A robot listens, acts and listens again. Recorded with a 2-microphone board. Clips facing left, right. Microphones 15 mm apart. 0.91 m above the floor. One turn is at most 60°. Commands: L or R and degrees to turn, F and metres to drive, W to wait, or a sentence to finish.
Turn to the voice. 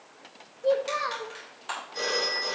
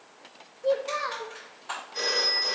L30
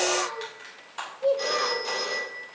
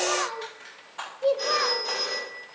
R30
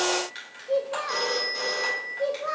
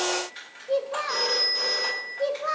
R25
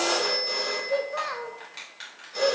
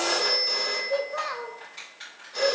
Found it: a child speaking, straight ahead.